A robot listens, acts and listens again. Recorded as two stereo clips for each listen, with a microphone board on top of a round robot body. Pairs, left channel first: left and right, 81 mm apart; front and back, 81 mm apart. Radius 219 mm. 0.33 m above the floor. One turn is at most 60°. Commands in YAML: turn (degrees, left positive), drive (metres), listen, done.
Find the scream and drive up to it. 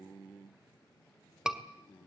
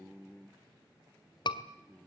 turn: -10
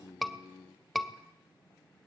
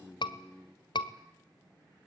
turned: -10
drive: 1.0
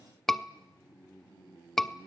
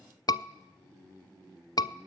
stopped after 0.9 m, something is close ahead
done: "Arrived at the scream, straight ahead."